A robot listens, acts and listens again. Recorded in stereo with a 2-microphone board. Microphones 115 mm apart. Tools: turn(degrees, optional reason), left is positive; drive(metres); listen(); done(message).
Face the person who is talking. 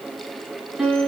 listen()
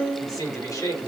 turn(degrees=35, reason="The man speaking: about 35° left or 145° left.")
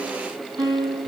listen()
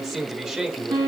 done("Facing the man speaking, 2 to 4 m away.")